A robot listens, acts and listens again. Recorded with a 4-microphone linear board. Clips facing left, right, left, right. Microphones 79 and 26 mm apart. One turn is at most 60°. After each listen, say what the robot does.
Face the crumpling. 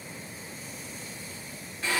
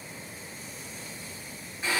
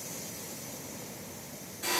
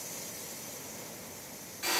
Keep listening.
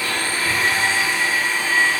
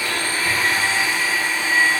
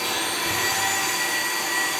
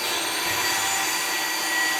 Keep listening.
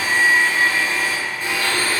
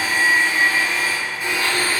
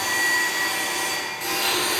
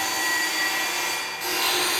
I can't make out crumpling, only a blender.